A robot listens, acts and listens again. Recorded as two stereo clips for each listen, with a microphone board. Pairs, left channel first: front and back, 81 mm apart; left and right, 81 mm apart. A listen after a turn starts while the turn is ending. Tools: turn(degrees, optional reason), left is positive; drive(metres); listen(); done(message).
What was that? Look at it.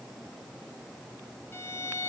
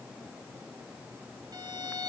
turn(degrees=-60, reason="The violin: 60° right.")
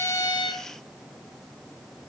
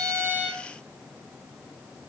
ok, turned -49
turn(degrees=-10, reason="Nothing new. It was at 10° right.")
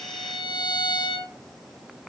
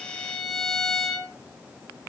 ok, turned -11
done("Facing the violin, 2 to 4 m away.")